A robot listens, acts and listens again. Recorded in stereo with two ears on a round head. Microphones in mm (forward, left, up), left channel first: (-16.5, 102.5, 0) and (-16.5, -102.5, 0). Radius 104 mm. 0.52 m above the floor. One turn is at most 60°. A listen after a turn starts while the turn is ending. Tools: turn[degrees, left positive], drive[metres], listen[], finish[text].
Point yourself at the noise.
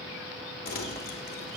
Thought: The crumpling: about 40° left or 140° left.
Action: turn[40]
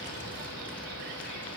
Action: listen[]
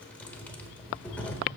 Action: finish[Facing the crumpling.]